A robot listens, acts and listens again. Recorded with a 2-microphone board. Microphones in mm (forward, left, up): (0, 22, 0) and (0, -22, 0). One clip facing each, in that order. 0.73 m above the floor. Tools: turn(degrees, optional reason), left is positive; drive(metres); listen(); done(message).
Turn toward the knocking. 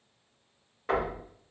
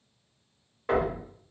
turn(degrees=30)
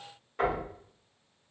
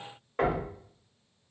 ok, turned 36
turn(degrees=-35, reason="So it is at 35° right.")
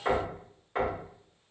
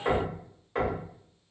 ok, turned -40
done("Facing the knocking, 1 to 2 m away.")